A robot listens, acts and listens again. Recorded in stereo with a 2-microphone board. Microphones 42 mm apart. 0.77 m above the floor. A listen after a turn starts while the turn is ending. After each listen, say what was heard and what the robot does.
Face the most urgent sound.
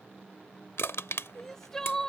Turn 30° left.
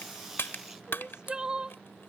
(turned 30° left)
So it is at 20° right. Turn 20° right.
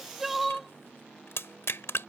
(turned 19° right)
Facing the crying.